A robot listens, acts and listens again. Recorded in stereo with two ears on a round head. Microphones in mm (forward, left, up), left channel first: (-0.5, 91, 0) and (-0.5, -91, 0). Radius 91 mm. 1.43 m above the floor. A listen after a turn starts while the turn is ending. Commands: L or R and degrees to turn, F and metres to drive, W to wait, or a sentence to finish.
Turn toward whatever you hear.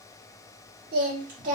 R40
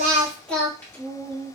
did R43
L15
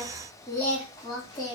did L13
L20
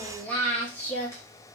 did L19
L15
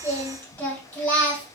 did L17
L10
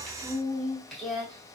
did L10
Facing the singing, 1 to 2 m away.